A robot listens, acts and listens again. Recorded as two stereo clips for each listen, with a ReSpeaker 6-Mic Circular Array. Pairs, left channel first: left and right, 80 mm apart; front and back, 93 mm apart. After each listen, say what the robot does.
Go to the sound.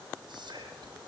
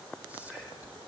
Turn 105° right.
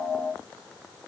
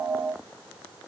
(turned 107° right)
Keep listening.
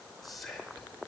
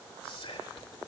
Drive 1.0 m forward.
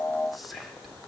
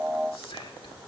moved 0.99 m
Drive 1.0 m forward.
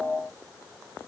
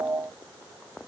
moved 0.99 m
Keep listening.
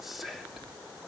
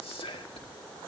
Drive 1.0 m forward.
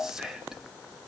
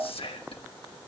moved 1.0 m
Drive 1.0 m forward.
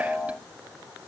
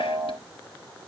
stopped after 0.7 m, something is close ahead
Keep listening.
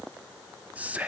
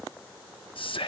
Turn 15° right.
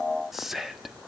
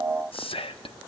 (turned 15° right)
Arrived at the whispering, straight ahead.